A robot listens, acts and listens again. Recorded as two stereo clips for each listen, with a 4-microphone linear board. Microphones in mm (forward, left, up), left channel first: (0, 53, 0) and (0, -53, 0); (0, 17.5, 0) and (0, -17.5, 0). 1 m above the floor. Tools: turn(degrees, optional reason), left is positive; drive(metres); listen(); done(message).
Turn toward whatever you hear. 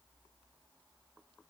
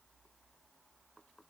listen()
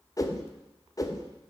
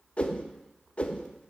turn(degrees=35, reason="The whoosh: about 35° left or 145° left.")
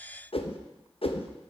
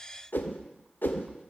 turn(degrees=110, reason="So it is at 110° left.")
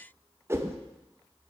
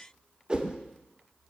turn(degrees=-25, reason="The whoosh is now 25° right.")
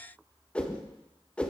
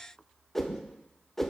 turn(degrees=10, reason="The whoosh is now 10° left.")
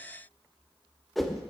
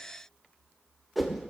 done("Facing the whoosh, under 1 m away.")